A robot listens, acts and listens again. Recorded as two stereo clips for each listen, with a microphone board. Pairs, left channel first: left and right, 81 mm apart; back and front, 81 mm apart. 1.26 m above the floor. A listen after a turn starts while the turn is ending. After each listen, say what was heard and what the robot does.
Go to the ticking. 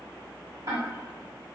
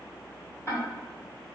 The ticking: 130° right. Turn 130° right.
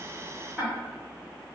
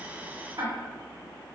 The ticking is now 25° right. Turn 25° right.
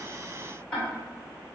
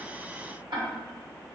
The ticking is now 15° left. Turn 15° left.
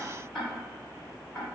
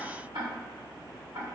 The ticking is now 10° left. Turn 10° left.
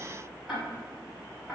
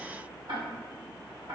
Drive 1.0 m forward.
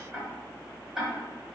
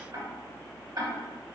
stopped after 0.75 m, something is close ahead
The ticking is now 10° right. Turn 10° right.
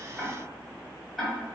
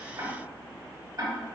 I am next to the ticking.